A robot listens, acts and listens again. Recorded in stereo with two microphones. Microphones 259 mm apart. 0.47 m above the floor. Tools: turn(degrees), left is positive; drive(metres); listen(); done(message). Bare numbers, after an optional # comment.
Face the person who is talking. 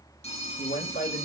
# The man speaking: about 40° left or 140° left.
turn(40)
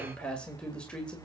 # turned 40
done("Found it: a man speaking, straight ahead.")